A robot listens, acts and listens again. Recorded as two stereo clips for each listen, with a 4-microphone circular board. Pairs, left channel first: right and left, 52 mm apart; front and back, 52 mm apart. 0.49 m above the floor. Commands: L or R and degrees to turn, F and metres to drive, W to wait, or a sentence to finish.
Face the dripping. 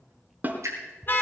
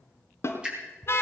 L110
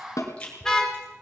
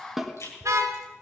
R20
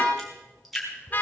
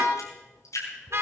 Found it: dripping, straight ahead.